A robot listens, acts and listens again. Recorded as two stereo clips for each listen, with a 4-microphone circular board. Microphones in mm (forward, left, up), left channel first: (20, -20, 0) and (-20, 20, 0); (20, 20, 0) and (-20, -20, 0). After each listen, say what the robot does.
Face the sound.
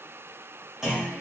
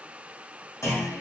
Turn 55° left.
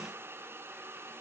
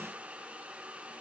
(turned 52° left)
I heard a clunk from this way, but can't make it out now.